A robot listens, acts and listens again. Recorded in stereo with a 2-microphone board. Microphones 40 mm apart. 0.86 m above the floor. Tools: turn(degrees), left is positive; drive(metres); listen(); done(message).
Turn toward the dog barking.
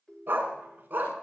turn(degrees=-40)
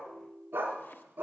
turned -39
turn(degrees=-120)
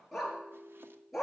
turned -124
turn(degrees=-10)
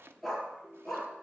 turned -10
done("Facing the dog barking.")